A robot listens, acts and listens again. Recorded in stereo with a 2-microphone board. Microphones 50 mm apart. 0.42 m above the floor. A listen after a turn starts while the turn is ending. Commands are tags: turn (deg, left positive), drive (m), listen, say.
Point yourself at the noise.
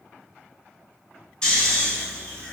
<turn deg="20"/>
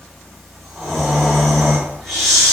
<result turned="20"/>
<say>Found it: snoring, straight ahead.</say>